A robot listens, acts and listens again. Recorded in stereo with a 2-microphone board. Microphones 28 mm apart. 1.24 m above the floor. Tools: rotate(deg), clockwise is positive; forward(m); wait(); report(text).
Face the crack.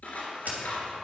rotate(70)
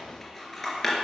wait()
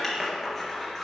report("I heard a crack, but can't make it out now. It was about straight ahead or 40° right.")